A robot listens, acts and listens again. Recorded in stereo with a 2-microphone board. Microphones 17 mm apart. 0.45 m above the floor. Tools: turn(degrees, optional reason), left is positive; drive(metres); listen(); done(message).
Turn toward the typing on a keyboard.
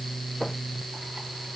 listen()
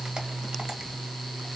listen()
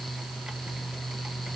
done("I can't make out typing on a keyboard.")